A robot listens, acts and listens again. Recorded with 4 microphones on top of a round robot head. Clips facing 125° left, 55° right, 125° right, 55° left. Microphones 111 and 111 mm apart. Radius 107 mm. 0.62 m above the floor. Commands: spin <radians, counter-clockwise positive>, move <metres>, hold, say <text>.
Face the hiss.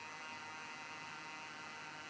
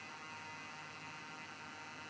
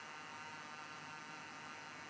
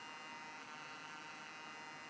hold
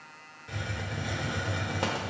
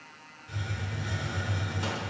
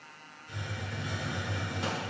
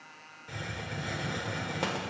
spin 1.57
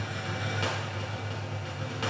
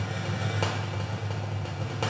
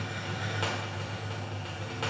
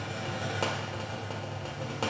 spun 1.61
say Found it: a hiss, straight ahead.